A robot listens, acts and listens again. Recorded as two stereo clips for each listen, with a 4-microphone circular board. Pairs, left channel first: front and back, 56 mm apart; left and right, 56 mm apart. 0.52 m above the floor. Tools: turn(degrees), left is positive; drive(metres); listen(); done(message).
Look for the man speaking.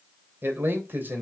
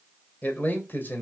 turn(degrees=135)
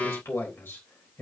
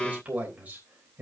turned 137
turn(degrees=-40)
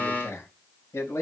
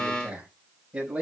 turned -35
turn(degrees=-20)
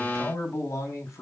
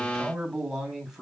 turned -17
done("Found it: a man speaking, straight ahead, over 4 m away.")